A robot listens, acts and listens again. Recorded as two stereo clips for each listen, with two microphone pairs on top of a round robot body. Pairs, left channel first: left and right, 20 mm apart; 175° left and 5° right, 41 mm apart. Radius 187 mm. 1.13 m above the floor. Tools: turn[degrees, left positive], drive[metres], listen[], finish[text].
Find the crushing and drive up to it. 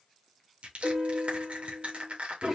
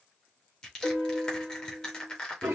Thought: The crushing: 110° right.
Action: turn[-110]
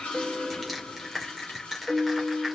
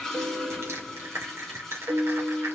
Action: drive[1.0]
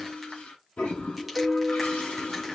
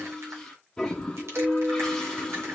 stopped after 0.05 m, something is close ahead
Action: listen[]
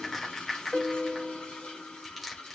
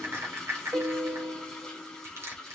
Action: finish[Something is in my way. I am facing the crushing but have not reached it.]